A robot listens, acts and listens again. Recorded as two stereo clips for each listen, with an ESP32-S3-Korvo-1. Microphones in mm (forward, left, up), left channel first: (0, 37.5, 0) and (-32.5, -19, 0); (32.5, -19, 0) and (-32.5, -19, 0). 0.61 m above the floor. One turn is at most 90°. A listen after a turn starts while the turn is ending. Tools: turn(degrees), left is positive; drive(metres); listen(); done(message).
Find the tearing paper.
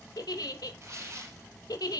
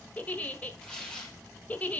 turn(degrees=-75)
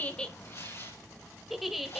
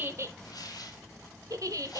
turn(degrees=15)
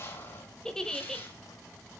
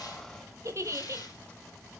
listen()
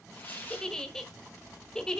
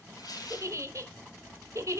done("Facing the tearing paper.")